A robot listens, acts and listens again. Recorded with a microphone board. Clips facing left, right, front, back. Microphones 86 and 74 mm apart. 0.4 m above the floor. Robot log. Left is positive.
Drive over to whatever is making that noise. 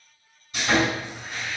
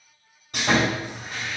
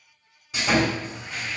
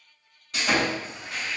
note: The sawing: 85° right.
cmd yaw -85
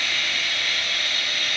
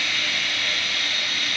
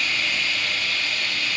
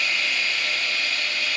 note: The sawing is now 25° right.
cmd yaw -25
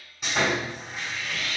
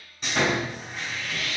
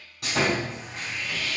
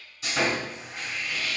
cmd fwd 1.0
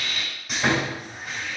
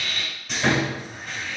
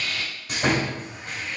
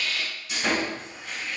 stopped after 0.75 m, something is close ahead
note: The sawing is now 10° left.
cmd yaw +10
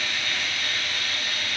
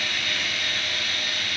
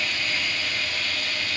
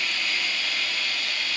end: Arrived at the sawing, straight ahead.